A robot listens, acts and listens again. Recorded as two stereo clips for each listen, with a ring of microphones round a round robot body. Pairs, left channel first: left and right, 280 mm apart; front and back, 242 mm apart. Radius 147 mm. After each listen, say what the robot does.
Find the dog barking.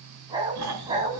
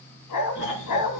Turn 15° right.
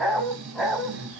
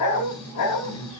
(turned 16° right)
Facing the dog barking, 2 to 4 m away.